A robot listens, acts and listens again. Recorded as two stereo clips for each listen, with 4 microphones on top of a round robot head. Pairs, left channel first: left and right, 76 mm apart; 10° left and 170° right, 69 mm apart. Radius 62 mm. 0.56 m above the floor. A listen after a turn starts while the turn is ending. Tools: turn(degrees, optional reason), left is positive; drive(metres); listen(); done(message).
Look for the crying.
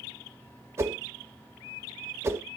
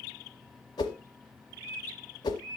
listen()
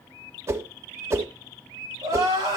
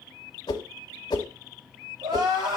turn(degrees=-135, reason="The crying: 135° right.")
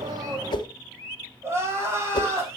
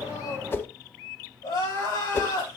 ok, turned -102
turn(degrees=-30, reason="The crying is now 30° right.")
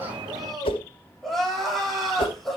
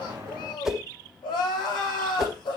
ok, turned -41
done("Facing the crying.")